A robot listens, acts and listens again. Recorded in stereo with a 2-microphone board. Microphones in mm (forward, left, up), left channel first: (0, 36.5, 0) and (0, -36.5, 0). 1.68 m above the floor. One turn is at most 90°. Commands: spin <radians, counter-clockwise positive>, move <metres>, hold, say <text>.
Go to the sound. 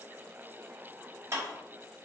spin -0.79
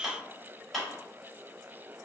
move 1.0
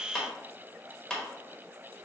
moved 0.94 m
move 1.0
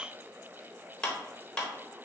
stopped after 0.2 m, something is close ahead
spin 0.17
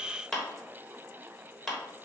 say Arrived at the clap, straight ahead.